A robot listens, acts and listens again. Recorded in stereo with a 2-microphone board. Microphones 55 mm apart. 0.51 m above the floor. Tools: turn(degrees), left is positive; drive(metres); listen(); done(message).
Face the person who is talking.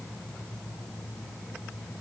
listen()
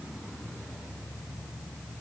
listen()
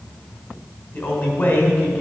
turn(degrees=30)
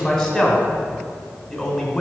done("Facing the man speaking, 1 to 2 m away.")